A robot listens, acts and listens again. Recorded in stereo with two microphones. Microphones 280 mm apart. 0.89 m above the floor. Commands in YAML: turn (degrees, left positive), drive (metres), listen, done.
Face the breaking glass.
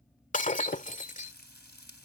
turn: 25
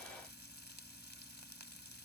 listen: true
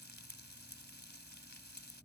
done: "I heard breaking glass, but can't make it out now. It was about straight ahead or 130° left."